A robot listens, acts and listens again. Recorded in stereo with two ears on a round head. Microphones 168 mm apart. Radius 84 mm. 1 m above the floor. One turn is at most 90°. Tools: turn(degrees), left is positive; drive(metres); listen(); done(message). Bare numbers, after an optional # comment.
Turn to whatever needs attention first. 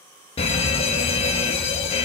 # The fire alarm: about 30° left or 150° left.
turn(30)
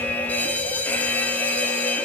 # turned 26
# So it is at 10° left.
turn(10)
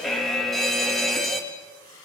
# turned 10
done("Facing the fire alarm, 2 to 4 m away.")